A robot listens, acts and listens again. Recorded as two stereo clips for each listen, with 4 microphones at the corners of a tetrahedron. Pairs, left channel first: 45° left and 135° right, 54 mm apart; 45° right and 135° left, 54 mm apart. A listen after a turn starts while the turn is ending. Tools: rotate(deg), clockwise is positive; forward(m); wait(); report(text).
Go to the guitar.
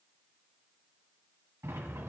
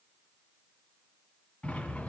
wait()
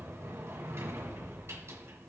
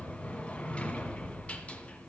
wait()
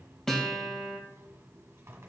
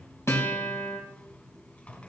rotate(35)
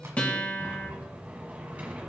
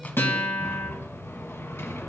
forward(1.0)
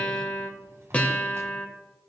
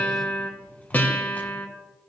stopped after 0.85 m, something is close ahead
rotate(10)
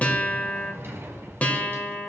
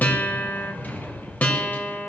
report("I am next to the guitar.")